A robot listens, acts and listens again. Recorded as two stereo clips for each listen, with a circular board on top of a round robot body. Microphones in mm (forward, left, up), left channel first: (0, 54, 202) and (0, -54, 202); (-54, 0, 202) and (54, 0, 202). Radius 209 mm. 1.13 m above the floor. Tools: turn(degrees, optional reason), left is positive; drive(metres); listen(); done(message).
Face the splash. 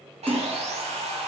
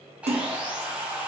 turn(degrees=-20, reason="The splash: 20° right.")
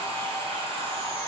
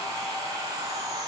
done("I heard a splash from this way, but can't make it out now.")